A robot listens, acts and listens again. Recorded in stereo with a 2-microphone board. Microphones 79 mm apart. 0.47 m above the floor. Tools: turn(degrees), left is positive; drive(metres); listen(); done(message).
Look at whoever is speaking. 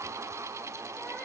listen()
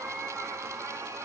listen()
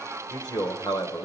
turn(degrees=55)
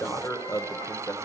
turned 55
turn(degrees=50)
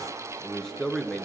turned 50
turn(degrees=10)
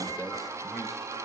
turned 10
listen()
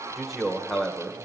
done("Facing the man speaking, 1 to 2 m away.")